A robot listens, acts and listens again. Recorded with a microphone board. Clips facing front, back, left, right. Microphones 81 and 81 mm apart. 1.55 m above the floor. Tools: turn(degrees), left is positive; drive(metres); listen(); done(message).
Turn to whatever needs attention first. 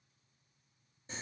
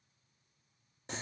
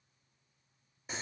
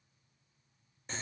listen()
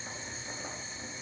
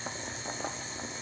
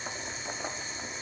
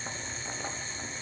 listen()
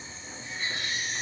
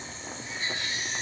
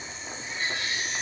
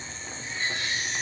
turn(degrees=-35)
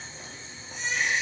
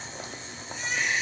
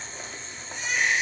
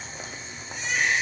turn(degrees=-15)
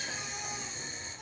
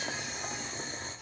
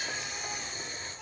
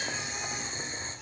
listen()
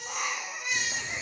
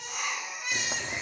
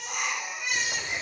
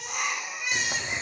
done("Found it: a baby crying, straight ahead, 2 to 4 m away.")